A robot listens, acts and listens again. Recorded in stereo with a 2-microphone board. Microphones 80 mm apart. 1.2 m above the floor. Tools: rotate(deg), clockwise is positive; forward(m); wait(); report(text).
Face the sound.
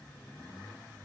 wait()
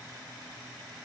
wait()
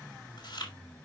rotate(-90)
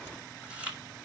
rotate(15)
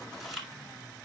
report("Facing the chewing.")